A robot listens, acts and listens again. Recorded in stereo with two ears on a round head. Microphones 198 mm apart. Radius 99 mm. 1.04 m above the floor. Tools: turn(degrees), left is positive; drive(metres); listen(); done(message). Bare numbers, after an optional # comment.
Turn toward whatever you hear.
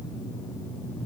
listen()
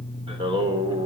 # The singing: about 20° right or 160° right.
turn(-20)
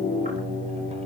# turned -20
listen()
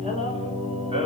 # The singing: about 25° right or 155° right.
turn(-25)
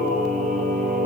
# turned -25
# So it is at 140° right.
turn(-140)
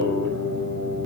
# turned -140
# The singing is now 45° right.
turn(-45)
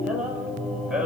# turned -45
done("Found it: singing, straight ahead, over 4 m away.")